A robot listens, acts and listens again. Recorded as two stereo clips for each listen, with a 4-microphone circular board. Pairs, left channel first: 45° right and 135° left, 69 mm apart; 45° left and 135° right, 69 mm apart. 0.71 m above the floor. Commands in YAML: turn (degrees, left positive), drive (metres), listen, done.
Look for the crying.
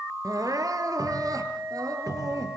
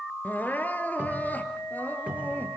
turn: 110
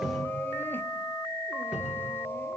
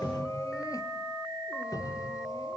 listen: true
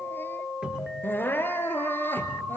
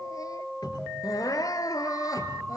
turn: 15
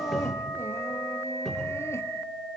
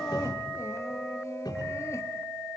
listen: true
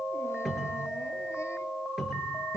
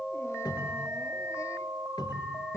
listen: true
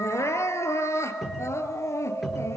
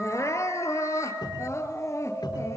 done: "Facing the crying, 2 to 4 m away."